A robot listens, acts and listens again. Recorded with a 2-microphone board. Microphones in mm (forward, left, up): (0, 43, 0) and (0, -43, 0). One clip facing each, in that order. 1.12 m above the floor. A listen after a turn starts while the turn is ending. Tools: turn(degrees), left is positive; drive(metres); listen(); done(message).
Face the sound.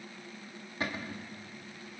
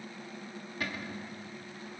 turn(degrees=30)
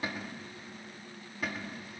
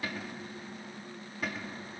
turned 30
done("Facing the cupboard door, 1 to 2 m away.")